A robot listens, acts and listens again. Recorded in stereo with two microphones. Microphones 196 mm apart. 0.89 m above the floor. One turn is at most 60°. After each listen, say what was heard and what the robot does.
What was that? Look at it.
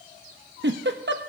The giggle: about 65° right or 115° right. Turn 60° right.
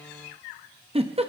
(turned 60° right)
So it is at 35° right. Turn 35° right.
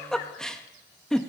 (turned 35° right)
Facing the giggle, under 1 m away.